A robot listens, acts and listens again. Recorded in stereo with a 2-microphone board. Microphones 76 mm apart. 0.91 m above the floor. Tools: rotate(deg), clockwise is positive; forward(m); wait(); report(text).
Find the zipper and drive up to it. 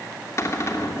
wait()
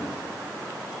wait()
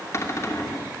report("I can't make out a zipper, only a cupboard door.")